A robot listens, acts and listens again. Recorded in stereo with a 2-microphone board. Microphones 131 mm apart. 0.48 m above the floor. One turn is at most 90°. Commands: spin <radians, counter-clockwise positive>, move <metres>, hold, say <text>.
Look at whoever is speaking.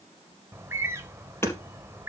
hold
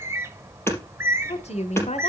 spin 0.96
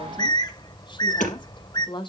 spin 0.79
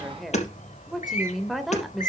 say Found it: a woman speaking, straight ahead, 1 to 2 m away.